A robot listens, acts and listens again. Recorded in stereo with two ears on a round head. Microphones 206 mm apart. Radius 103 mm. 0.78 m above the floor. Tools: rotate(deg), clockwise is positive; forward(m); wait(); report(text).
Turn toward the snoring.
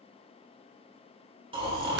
rotate(25)
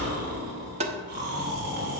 rotate(130)
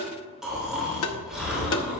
report("Facing the snoring.")